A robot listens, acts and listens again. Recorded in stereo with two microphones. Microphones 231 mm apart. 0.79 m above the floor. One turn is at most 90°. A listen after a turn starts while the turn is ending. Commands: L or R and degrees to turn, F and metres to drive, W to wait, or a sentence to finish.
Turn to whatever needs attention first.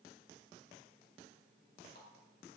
W
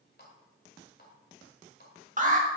R35
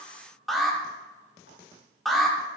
Facing the alarm.